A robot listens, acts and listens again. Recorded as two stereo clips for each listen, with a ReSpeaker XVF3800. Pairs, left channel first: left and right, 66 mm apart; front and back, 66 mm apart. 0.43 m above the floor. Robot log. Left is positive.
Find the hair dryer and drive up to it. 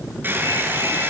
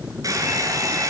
note: The hair dryer: 150° right.
cmd yaw -150
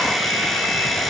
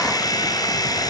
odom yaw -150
cmd fwd 1.0
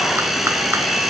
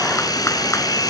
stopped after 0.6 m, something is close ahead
end: Something is in my way. I am facing the hair dryer but have not reached it.